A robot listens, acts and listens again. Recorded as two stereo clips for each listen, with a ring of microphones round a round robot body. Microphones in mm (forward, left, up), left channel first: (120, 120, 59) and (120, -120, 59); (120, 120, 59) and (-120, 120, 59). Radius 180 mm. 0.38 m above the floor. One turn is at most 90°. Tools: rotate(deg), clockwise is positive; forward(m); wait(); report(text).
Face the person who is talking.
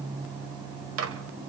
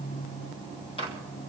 wait()
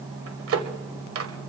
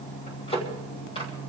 wait()
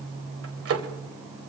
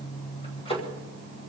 report("I can't make out anyone speaking, only a microwave.")